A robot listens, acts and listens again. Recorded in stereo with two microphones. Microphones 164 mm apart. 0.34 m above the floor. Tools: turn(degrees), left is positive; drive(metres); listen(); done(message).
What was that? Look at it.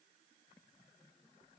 listen()
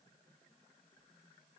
listen()
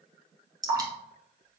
turn(degrees=-25)
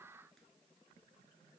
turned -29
listen()
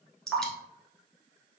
done("Facing the dripping, 1 to 2 m away.")